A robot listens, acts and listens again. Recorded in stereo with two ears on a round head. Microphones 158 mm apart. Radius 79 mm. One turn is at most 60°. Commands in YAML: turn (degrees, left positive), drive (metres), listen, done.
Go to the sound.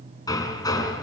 turn: 20
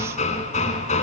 turn: 60
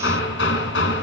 turn: 60
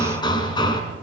turn: 25
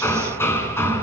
turn: 15
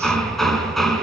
drive: 1.0
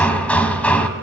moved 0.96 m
turn: 10
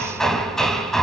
drive: 1.0
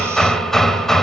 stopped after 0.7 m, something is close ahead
done: "I am next to the hammering."